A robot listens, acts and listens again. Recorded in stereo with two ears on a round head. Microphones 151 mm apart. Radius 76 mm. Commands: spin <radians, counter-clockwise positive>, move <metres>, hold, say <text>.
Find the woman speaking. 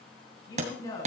spin 0.35
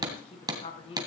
spin 0.61
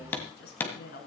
spin 2.09
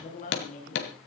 spin 0.87
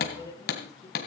spin 0.44
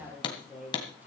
spin -0.17
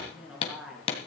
say Found it: a woman speaking, straight ahead.